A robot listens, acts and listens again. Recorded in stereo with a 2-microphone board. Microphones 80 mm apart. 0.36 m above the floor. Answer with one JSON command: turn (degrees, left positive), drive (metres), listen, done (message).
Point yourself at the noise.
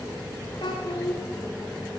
{"turn": 75}
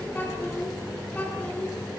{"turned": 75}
{"turn": 15}
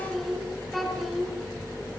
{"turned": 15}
{"done": "Found it: a child speaking, straight ahead, 2 to 4 m away."}